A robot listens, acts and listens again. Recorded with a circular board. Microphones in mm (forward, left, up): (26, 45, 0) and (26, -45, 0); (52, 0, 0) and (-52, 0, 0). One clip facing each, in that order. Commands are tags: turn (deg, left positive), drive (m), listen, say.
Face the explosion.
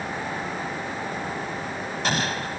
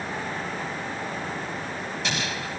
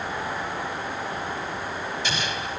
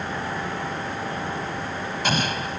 <turn deg="135"/>
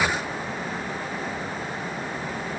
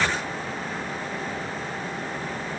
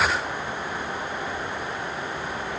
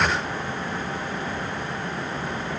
<say>I heard an explosion from this way, but can't make it out now.</say>